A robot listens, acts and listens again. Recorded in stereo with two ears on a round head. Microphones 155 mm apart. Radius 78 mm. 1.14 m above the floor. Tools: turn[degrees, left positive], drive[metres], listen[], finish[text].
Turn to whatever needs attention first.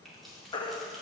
Thought: The baby crying: about 25° left or 155° left.
Action: turn[25]
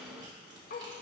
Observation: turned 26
Action: listen[]
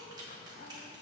Action: listen[]
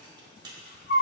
Thought: So it is at 125° left.
Action: turn[125]
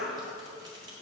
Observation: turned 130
Action: listen[]
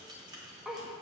Action: listen[]
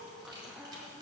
Action: finish[Facing where the baby crying came from. I can't hear it now.]